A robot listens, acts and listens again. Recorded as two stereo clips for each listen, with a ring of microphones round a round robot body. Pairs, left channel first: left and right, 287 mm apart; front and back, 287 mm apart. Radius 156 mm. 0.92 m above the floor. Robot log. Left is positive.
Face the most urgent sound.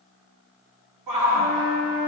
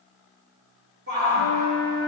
note: The shout: 120° right.
cmd yaw -120
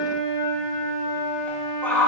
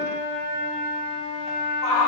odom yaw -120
end: Found it: a shout, straight ahead, 2 to 4 m away.